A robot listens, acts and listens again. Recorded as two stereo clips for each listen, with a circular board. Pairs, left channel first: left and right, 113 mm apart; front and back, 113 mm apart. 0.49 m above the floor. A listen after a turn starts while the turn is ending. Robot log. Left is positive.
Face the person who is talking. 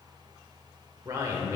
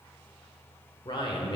note: The man speaking: 35° right.
cmd yaw -35
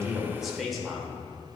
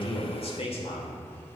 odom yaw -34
end: Found it: a man speaking, straight ahead, 1 to 2 m away.